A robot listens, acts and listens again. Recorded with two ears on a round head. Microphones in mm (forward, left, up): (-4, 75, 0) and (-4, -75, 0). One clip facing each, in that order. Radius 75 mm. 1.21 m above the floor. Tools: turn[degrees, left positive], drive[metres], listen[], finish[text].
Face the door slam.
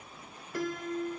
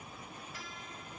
Action: listen[]
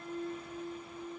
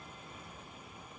Action: listen[]
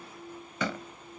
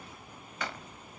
Action: turn[90]
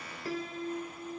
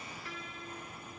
Action: finish[Facing where the door slam came from. I can't hear it now.]